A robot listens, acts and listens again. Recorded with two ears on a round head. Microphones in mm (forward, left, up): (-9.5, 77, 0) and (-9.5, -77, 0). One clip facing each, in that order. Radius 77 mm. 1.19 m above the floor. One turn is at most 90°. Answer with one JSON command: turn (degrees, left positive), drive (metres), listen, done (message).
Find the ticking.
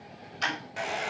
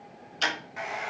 {"turn": -40}
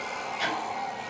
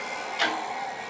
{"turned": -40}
{"turn": -90}
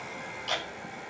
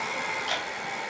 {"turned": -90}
{"turn": -10}
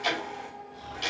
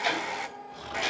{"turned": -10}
{"done": "Found it: ticking, straight ahead, 2 to 4 m away."}